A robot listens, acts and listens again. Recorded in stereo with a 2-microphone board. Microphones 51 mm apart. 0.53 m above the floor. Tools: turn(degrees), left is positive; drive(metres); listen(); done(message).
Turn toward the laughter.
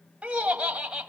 turn(degrees=-20)
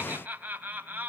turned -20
turn(degrees=-30)
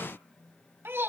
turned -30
turn(degrees=-130)
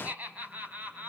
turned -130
turn(degrees=-35)
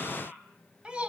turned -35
turn(degrees=-20)
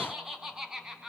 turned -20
turn(degrees=-10)
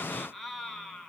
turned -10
done("Found it: laughter, straight ahead, over 4 m away.")